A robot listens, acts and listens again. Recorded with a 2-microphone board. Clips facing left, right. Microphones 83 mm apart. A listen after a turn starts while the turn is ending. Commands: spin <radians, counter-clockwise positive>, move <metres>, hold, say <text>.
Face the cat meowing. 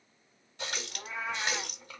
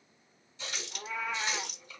spin 0.35
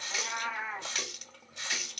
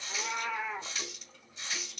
spin 2.44
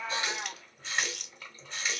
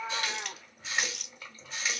hold
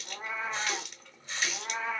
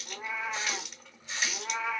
spin 0.70
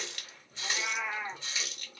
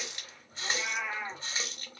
say Facing the cat meowing, 1 to 2 m away.